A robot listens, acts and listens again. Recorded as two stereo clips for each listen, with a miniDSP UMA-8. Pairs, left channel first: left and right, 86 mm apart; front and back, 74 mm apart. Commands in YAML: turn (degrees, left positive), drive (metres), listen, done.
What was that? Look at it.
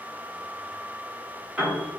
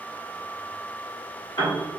turn: -20
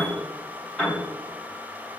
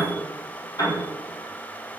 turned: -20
done: "Facing the piano."